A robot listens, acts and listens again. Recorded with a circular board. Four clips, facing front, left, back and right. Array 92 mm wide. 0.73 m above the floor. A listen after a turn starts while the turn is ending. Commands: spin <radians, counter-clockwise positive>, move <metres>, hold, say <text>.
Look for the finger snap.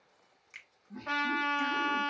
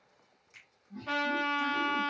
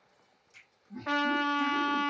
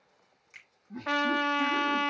spin -0.44
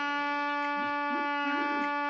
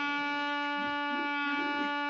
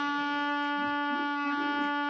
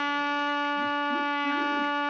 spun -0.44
hold
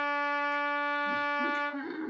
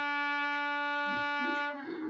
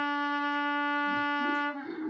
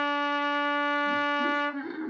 hold
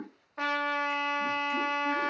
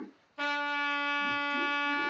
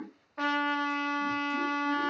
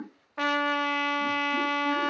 say I heard a finger snap from this way, but can't make it out now.